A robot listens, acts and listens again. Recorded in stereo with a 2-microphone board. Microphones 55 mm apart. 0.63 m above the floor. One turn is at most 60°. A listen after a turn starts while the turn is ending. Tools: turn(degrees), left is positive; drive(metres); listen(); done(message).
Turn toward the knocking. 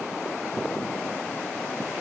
listen()
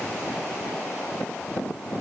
listen()
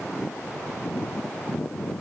done("I can't make out knocking.")